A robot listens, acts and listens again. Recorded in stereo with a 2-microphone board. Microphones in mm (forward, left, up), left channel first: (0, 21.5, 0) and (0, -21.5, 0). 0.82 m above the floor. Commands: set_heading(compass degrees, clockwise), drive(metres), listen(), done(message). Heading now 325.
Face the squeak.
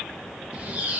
set_heading(355)
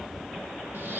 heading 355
set_heading(115)
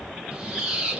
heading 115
set_heading(135)
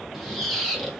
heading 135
done("Facing the squeak.")